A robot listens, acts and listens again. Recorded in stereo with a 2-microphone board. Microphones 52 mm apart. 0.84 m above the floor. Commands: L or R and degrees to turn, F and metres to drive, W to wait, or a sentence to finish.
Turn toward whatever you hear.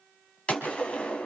L25
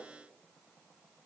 W
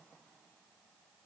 I heard a gunshot, but can't make it out now. It was about straight ahead or 130° left.